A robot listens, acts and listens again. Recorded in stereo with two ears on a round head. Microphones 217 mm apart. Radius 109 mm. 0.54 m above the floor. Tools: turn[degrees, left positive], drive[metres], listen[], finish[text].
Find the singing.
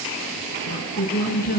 Thought: The singing: about 40° left or 140° left.
Action: turn[40]
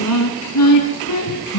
Thought: So it is at 100° left.
Action: turn[100]
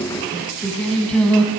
Action: finish[Facing the singing.]